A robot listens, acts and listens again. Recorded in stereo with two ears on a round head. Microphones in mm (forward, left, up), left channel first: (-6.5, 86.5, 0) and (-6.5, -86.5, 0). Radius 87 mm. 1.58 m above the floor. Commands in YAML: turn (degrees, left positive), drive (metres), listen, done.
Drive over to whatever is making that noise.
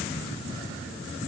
listen: true
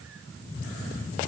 listen: true
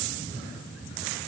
done: "I can't make out anything."